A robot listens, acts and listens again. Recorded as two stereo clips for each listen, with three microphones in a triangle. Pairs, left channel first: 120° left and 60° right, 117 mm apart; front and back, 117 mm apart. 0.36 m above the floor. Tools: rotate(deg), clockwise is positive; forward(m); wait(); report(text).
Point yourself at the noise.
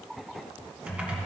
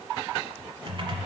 rotate(140)
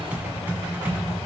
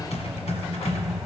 rotate(-15)
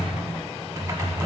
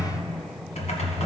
report("Facing the typing on a keyboard, 1 to 2 m away.")